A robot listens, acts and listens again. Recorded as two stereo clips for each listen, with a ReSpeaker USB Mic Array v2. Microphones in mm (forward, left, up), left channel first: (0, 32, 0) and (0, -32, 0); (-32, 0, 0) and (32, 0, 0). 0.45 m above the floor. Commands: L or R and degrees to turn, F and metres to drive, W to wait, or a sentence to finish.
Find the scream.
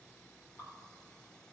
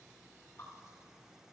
W
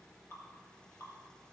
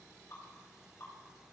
W
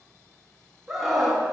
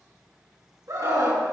Found it: a scream, straight ahead, 2 to 4 m away.